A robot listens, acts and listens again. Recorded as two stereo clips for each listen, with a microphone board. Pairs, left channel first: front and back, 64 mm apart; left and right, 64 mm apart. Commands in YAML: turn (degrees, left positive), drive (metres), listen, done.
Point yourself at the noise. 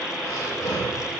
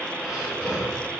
turn: -10
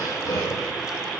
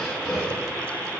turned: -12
done: "Found it: breathing, straight ahead, 2 to 4 m away."